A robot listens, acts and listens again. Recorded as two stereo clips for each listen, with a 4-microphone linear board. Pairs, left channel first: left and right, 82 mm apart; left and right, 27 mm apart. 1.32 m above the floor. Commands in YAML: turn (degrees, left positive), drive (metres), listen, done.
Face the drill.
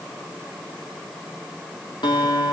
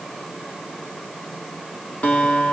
listen: true
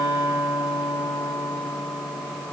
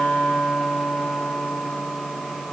listen: true
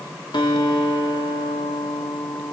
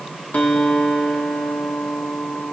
done: "I can't make out a drill, only a guitar."